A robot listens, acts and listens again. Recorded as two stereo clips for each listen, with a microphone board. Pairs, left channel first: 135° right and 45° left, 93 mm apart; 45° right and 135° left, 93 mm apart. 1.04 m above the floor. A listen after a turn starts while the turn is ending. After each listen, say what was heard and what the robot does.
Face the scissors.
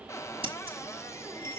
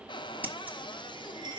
The scissors: 65° left. Turn 65° left.
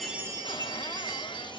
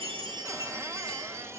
Keep listening.
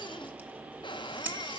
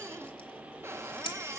The scissors is now 25° right. Turn 25° right.
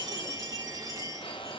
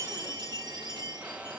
Keep listening.
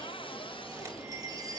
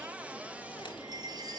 Keep listening.
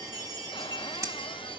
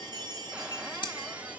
The scissors is now 10° right. Turn 10° right.
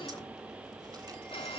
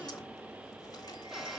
Keep listening.
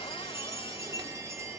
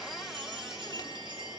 Keep listening.
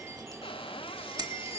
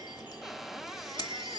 Facing the scissors.